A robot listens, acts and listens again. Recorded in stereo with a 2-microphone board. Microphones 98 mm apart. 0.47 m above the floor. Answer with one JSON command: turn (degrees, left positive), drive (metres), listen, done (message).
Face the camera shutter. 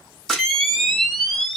{"turn": 30}
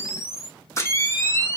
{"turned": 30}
{"turn": 145}
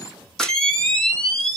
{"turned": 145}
{"done": "Found it: a camera shutter, straight ahead, 1 to 2 m away."}